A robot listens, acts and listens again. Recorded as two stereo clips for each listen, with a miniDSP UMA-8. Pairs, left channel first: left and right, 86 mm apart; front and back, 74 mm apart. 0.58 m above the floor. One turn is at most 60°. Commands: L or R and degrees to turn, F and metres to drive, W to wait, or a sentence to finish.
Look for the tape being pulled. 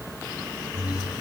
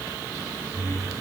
W
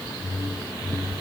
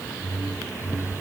W
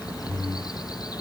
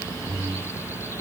I can't make out tape being pulled, only a whoosh.